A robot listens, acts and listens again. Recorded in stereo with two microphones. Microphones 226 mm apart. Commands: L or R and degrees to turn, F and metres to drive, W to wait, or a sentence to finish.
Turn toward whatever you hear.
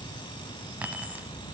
R30
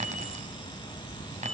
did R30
R145
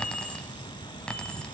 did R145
Found it: keys jangling, straight ahead, 1 to 2 m away.